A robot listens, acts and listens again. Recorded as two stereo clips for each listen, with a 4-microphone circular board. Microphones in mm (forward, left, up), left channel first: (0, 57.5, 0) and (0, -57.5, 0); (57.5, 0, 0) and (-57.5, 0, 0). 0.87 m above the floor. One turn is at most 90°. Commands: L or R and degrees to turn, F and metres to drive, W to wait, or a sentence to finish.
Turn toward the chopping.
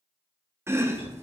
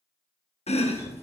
R25
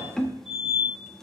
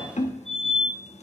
Found it: chopping, straight ahead.